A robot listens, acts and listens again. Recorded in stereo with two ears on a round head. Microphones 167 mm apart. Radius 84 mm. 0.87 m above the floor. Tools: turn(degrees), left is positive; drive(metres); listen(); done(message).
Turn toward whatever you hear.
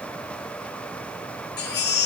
turn(degrees=65)
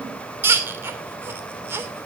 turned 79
turn(degrees=-15)
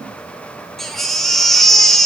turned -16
done("Facing the baby crying, 2 to 4 m away.")